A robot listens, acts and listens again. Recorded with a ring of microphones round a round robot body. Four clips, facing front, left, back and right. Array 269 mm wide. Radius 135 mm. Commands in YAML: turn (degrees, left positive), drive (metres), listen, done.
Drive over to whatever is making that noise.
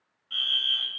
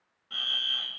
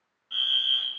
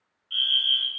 turn: 90
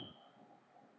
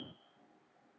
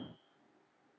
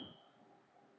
listen: true
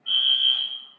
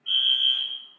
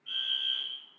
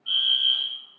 turn: -10
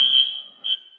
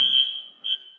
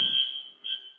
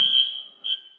drive: 1.0
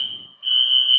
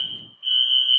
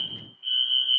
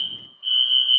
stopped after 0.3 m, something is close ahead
turn: -10
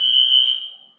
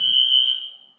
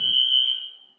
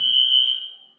done: "Something is in my way. I am facing the fire alarm but have not reached it."